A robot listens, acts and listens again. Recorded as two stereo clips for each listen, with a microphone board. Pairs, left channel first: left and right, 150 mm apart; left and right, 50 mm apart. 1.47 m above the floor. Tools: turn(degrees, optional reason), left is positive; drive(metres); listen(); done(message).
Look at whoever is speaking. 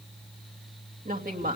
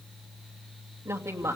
turn(degrees=-70, reason="The woman speaking: about 70° right or 110° right.")
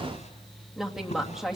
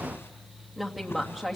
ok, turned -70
done("Facing the woman speaking, 2 to 4 m away.")